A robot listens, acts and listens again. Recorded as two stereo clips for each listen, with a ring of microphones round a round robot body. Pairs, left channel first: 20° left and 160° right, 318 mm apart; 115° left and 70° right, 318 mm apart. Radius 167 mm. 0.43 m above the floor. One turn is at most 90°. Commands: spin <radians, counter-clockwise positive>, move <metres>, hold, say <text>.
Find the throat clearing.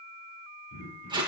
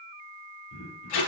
spin 1.13
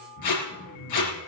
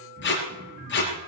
say Found it: throat clearing, straight ahead, over 4 m away.